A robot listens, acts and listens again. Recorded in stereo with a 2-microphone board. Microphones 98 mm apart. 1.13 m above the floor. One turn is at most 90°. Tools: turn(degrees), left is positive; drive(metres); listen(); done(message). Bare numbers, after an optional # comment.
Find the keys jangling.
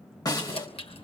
turn(90)
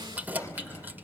# So it is at 20° right.
turn(-20)
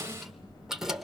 done("Found it: keys jangling, straight ahead.")